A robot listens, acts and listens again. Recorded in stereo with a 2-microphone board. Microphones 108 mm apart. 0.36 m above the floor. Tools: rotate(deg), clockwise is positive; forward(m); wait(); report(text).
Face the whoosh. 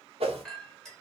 rotate(70)
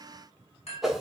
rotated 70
report("Found it: a whoosh, straight ahead, under 1 m away.")